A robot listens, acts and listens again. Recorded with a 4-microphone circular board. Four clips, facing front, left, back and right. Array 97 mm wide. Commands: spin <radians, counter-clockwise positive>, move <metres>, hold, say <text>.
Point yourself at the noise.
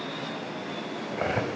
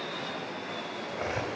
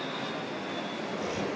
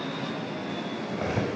say Facing the cutlery clinking, 2 to 4 m away.